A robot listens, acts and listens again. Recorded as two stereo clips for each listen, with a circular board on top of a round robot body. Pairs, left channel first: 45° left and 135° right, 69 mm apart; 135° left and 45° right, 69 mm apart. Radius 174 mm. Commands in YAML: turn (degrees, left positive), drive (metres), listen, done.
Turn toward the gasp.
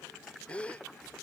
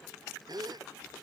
turn: -30
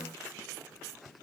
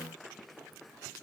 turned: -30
done: "I heard a gasp from this way, but can't make it out now."